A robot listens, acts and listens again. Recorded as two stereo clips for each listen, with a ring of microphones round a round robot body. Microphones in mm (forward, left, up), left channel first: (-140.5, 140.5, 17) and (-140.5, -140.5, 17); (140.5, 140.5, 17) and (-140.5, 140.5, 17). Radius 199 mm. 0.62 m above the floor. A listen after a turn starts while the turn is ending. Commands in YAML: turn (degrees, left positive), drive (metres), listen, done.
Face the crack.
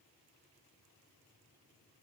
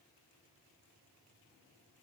listen: true
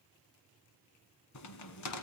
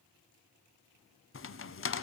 turn: 45
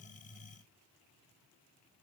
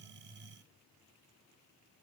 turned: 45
done: "I heard a crack from this way, but can't make it out now."